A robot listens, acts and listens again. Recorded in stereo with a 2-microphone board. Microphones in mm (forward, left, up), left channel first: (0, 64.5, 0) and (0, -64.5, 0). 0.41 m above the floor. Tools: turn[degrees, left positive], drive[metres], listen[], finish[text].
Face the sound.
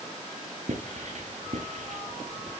Thought: The writing: about 65° right or 115° right.
Action: turn[-65]
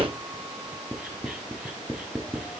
Action: finish[Found it: writing, straight ahead.]